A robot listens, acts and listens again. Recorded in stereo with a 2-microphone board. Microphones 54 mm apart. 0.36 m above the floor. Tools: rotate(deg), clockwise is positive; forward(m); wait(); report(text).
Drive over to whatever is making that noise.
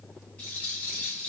rotate(-25)
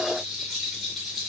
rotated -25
forward(1.0)
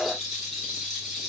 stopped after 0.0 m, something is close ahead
report("Something is in my way. I am facing the rattle but have not reached it.")